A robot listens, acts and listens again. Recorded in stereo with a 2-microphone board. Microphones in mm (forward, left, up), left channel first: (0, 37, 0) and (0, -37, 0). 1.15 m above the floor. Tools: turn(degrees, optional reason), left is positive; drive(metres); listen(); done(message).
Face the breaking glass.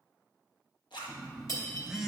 turn(degrees=50, reason="The breaking glass: about 50° left or 130° left.")
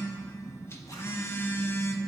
listen()
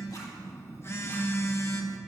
done("I heard breaking glass, but can't make it out now. It was about straight ahead or 80° left.")